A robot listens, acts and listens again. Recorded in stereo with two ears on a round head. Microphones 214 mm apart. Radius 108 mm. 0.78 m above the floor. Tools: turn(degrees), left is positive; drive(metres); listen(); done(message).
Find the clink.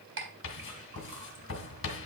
turn(degrees=-55)
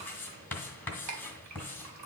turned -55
turn(degrees=-75)
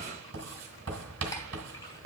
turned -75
listen()
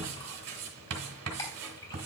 listen()
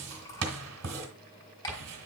turn(degrees=15)
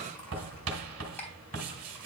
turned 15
turn(degrees=10)
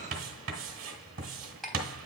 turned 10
done("Found it: a clink, straight ahead, 2 to 4 m away.")